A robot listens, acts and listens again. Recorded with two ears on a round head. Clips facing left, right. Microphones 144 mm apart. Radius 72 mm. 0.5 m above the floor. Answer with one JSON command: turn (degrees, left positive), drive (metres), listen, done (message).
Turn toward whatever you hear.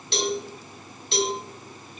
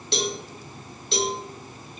{"turn": -90}
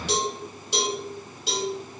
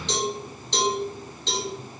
{"turn": 10}
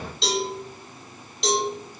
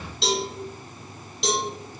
{"done": "Found it: a cowbell, straight ahead, under 1 m away."}